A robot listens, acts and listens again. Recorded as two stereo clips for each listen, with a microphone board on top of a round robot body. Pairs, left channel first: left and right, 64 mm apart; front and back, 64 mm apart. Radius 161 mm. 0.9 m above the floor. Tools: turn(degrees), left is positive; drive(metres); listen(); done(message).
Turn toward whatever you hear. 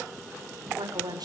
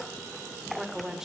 turn(degrees=-100)
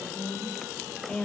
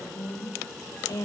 turn(degrees=20)
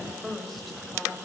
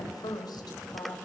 done("Found it: a woman speaking, straight ahead, over 4 m away.")